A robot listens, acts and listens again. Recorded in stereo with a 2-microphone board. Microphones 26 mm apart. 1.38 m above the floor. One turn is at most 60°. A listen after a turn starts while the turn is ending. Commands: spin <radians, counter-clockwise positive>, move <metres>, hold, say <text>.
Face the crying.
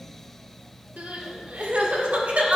spin -1.05
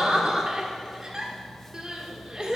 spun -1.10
spin -0.52
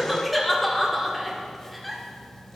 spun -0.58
say Found it: crying, straight ahead, 1 to 2 m away.